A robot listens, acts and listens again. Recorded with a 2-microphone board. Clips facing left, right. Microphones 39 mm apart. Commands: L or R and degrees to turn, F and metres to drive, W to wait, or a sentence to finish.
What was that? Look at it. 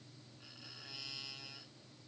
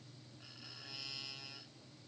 W
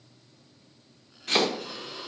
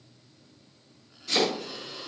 L60
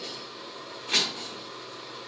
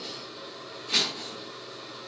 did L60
L55
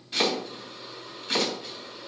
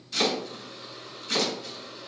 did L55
L30
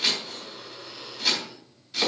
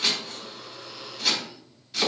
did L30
Facing the chopping.